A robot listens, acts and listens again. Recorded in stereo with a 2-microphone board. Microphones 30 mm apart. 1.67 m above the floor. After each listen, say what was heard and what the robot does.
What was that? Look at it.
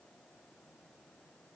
Keep listening.
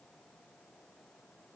Keep listening.
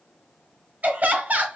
The laughter: about 60° right or 120° right. Turn 60° right.
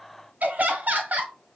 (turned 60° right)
So it is at 60° right. Turn 60° right.
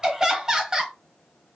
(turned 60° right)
The laughter is now 20° right. Turn 20° right.
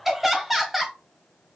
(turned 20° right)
Facing the laughter, under 1 m away.